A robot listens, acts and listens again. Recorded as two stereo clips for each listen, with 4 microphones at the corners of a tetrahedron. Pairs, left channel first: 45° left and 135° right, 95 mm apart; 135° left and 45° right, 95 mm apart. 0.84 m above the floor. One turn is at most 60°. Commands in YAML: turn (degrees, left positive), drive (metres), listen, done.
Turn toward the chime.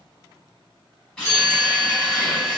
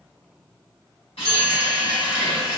turn: 10
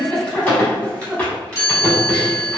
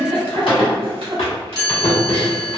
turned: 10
done: "Facing the chime, 1 to 2 m away."